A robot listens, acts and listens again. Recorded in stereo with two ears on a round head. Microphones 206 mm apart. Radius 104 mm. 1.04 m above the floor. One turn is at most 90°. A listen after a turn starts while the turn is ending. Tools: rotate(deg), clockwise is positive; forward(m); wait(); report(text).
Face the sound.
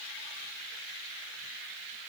wait()
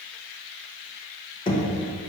rotate(-20)
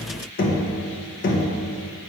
rotate(-90)
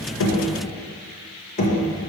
rotate(-35)
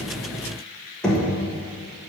report("Found it: knocking, straight ahead.")